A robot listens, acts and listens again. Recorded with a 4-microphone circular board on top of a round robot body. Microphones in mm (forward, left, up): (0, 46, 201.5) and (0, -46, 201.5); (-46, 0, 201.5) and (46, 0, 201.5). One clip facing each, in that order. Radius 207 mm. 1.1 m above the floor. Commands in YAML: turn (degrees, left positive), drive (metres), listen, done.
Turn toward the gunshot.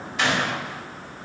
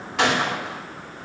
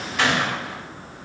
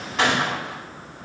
turn: -55
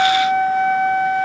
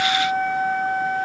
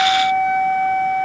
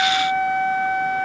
done: "I heard a gunshot from this way, but can't make it out now."